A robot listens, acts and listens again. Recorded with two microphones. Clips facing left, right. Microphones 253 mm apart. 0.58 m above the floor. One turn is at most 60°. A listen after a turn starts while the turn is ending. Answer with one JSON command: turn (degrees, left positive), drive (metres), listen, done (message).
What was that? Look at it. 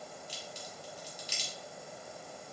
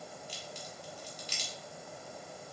{"turn": -55}
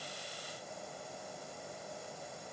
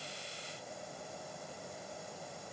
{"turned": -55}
{"listen": true}
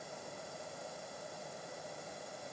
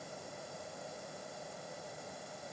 {"done": "I heard a crack, but can't make it out now. It was about straight ahead or 70° right."}